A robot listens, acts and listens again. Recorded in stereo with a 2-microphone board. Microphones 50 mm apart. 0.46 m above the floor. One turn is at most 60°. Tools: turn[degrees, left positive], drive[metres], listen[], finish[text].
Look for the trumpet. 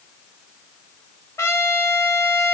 Thought: The trumpet: about 65° left or 115° left.
Action: turn[60]
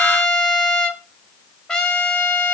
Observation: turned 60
Thought: So it is at 15° left.
Action: turn[15]
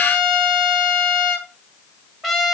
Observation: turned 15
Action: finish[Facing the trumpet.]